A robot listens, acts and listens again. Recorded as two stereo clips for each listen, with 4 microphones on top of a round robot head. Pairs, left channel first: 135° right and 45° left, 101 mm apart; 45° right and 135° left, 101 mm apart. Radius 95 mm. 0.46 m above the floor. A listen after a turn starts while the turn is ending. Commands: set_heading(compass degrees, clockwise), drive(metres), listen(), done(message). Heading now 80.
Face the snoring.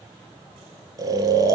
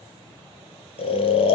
set_heading(90)
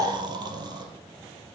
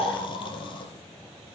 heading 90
done("Found it: snoring, straight ahead, 2 to 4 m away.")